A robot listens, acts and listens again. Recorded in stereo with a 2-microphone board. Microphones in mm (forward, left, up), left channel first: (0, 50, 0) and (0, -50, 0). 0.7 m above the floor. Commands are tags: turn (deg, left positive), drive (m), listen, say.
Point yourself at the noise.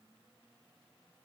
<listen/>
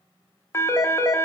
<turn deg="25"/>
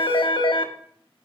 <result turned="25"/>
<turn deg="125"/>
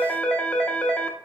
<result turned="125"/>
<turn deg="15"/>
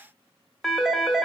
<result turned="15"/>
<say>Found it: a phone ringing, straight ahead.</say>